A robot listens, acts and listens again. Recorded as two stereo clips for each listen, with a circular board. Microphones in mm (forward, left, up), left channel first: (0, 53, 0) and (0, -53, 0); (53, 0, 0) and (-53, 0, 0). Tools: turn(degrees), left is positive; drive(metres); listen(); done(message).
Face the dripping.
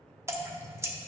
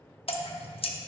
turn(degrees=-25)
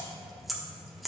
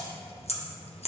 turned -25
done("Facing the dripping, under 1 m away.")